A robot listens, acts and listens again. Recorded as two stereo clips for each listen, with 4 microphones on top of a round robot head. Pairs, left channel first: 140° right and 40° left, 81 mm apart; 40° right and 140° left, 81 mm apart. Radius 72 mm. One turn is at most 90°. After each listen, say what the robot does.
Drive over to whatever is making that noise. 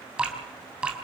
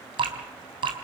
Turn 90° left.
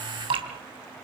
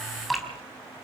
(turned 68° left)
Turn 50° left.
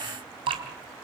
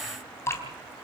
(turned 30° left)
Turn 20° left.
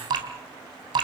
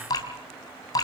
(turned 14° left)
Drive 1.0 m forward.
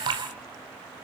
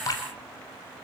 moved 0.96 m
Turn 10° left.
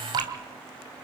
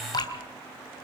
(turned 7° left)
Drive 1.0 m forward.
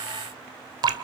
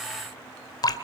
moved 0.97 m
Drive 1.0 m forward.
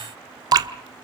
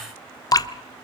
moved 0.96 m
Drive 1.0 m forward.
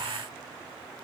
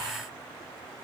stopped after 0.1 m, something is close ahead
Keep listening.
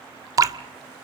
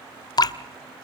Arrived at the dripping, straight ahead.